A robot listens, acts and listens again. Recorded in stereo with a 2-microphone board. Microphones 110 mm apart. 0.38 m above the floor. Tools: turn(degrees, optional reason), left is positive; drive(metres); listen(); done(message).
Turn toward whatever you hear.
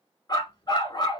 turn(degrees=45, reason="The dog barking: about 45° left or 135° left.")
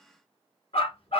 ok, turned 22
turn(degrees=110, reason="So it is at 110° left.")
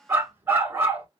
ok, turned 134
turn(degrees=-20, reason="The dog barking is now 20° right.")
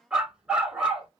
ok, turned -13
done("Found it: a dog barking, straight ahead.")